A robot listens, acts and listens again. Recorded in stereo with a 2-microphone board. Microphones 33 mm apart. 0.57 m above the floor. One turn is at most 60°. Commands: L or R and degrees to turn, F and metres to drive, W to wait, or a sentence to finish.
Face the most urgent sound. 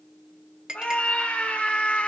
L40
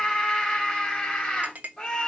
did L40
Facing the scream.